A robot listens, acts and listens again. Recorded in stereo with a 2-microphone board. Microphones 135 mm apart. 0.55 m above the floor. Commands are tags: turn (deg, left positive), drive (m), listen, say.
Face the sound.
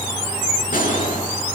<turn deg="90"/>
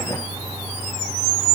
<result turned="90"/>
<say>I heard a gunshot from this way, but can't make it out now.</say>